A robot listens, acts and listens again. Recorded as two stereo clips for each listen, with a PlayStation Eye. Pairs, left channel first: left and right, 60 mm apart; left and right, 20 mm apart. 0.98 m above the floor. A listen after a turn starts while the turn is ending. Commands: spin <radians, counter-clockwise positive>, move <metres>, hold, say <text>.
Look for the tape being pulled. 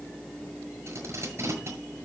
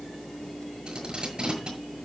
spin -0.87
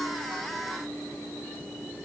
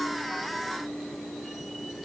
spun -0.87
hold
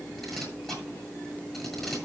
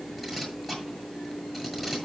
say Found it: tape being pulled, straight ahead, over 4 m away.